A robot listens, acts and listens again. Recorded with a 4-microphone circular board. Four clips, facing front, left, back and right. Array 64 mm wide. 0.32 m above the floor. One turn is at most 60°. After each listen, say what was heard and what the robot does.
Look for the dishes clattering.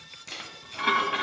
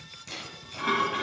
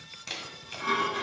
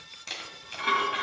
The dishes clattering: 10° right. Turn 10° right.
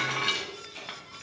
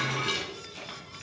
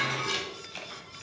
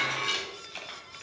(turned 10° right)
Found it: dishes clattering, straight ahead, 1 to 2 m away.